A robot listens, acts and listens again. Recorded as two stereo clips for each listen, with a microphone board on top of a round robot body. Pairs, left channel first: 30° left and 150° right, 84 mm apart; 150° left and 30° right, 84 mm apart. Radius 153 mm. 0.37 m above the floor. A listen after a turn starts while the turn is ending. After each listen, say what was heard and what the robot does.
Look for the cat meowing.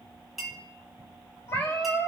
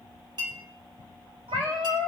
The cat meowing: 35° right. Turn 35° right.
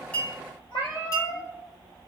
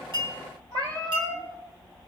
Found it: a cat meowing, straight ahead, 2 to 4 m away.